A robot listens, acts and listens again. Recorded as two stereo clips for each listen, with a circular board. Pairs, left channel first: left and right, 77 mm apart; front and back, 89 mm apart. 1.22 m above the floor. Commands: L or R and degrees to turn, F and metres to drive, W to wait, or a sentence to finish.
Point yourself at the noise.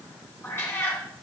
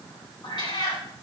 L35
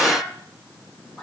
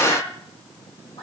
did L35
L10
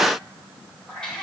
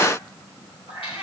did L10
L10
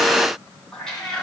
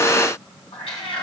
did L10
L10
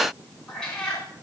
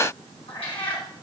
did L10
L10
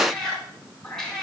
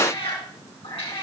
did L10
Found it: a cat meowing, straight ahead, 2 to 4 m away.